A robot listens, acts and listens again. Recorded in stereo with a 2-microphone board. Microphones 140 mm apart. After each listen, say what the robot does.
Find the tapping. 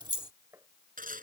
Turn 20° right.
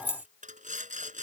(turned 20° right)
Keep listening.
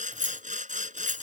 Keep listening.
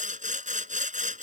I heard tapping, but can't make it out now. It was about straight ahead or 140° right.